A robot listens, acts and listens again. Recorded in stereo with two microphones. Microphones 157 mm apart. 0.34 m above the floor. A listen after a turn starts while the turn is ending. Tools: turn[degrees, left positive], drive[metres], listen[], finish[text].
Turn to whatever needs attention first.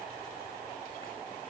Action: listen[]
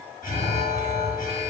Thought: The alarm: about 60° left or 120° left.
Action: turn[60]
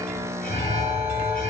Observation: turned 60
Thought: So it is at 60° left.
Action: turn[60]
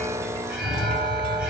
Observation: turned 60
Action: finish[Facing the alarm.]